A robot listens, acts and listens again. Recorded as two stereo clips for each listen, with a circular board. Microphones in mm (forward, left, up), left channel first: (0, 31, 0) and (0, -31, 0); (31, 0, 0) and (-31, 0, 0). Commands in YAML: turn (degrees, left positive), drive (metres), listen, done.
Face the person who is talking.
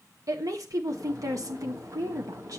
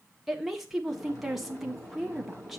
turn: -95
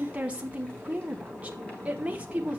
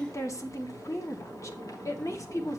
turn: -25
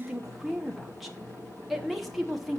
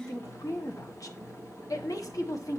done: "Facing the woman speaking."